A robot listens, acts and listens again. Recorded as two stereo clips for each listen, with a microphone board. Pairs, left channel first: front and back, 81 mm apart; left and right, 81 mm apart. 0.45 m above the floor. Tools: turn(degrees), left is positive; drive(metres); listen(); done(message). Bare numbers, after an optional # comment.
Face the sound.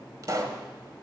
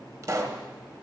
# The pop: 135° right.
turn(-135)
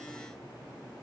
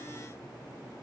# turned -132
done("I heard a pop from this way, but can't make it out now.")